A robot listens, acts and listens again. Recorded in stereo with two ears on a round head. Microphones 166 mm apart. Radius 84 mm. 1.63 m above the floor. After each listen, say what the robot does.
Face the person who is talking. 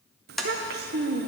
Turn 50° right.
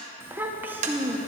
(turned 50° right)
Turn 10° right.
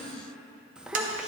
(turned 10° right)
Facing the child speaking.